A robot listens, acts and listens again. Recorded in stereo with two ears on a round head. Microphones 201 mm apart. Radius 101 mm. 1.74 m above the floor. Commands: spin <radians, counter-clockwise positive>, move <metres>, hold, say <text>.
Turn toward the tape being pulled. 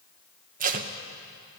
spin -0.61
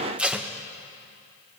say Facing the tape being pulled.